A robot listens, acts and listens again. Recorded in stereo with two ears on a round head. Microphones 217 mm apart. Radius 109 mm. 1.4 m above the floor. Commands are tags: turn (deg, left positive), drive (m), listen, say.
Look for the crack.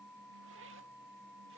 <listen/>
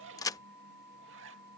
<turn deg="30"/>
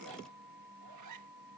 <listen/>
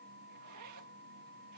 <say>I heard a crack, but can't make it out now. It was about 15° right or 135° left.</say>